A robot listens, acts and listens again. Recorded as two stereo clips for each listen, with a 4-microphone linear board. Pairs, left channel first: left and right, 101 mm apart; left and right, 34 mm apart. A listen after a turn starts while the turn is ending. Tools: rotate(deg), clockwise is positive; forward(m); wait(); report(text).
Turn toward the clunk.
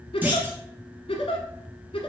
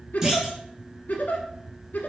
rotate(20)
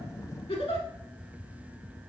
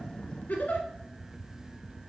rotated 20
wait()
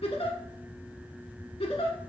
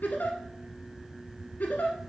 report("I heard a clunk, but can't make it out now. It was about straight ahead or 140° right.")